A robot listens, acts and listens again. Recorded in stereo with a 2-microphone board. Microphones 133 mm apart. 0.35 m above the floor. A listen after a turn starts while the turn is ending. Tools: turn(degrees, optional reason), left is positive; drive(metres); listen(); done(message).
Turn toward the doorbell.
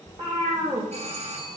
turn(degrees=-55, reason="The doorbell: about 55° right or 125° right.")
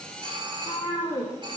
turn(degrees=-45, reason="So it is at 45° right.")
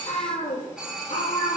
done("Facing the doorbell.")